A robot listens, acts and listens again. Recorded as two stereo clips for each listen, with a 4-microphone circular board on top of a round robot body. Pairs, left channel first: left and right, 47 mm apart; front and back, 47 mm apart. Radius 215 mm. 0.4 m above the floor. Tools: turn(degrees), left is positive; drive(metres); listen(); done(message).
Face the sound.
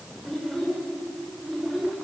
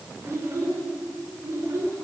turn(degrees=-170)
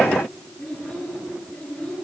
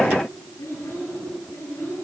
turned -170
turn(degrees=35)
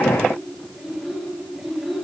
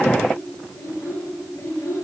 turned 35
done("Found it: a child speaking, straight ahead.")